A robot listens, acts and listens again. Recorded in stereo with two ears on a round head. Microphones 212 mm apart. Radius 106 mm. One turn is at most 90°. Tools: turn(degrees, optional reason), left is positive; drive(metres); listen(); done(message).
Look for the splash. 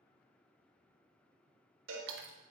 turn(degrees=-50, reason="The splash: about 50° right or 130° right.")
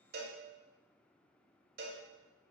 listen()
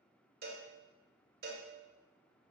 done("I heard a splash, but can't make it out now. It was about straight ahead or 80° right.")